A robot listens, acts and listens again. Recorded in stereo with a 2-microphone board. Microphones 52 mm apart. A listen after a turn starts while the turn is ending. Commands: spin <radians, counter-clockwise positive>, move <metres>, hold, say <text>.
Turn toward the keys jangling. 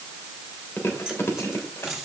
spin -0.52
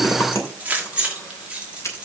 spin -2.79
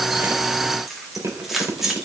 spin -0.17
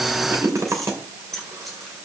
say Facing the keys jangling, 2 to 4 m away.